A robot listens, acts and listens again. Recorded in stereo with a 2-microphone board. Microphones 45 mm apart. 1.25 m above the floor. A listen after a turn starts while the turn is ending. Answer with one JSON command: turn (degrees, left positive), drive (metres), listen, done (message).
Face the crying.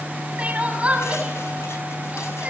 {"turn": -30}
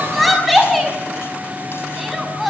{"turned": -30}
{"done": "Found it: crying, straight ahead, over 4 m away."}